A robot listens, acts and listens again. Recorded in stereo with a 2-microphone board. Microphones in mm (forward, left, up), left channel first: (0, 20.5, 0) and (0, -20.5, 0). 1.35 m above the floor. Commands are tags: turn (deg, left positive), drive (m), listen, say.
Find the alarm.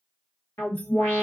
<turn deg="90"/>
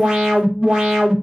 <turn deg="-10"/>
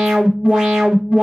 <say>Facing the alarm, 1 to 2 m away.</say>